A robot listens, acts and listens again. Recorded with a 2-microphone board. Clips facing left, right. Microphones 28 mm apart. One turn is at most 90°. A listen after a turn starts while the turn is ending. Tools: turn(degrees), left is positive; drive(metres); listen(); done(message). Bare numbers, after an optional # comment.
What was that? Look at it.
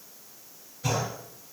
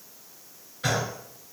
# The gunshot: about 50° right or 130° right.
turn(-50)
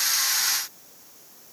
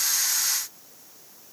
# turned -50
listen()
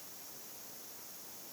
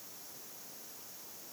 done("I heard a gunshot, but can't make it out now. It was about straight ahead or 80° right.")